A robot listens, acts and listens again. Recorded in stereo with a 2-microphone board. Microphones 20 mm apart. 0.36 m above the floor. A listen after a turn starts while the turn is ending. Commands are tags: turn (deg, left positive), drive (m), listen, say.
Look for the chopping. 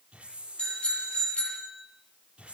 <listen/>
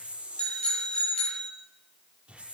<listen/>
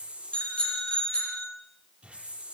<say>I can't make out chopping, only a hiss and a bicycle bell.</say>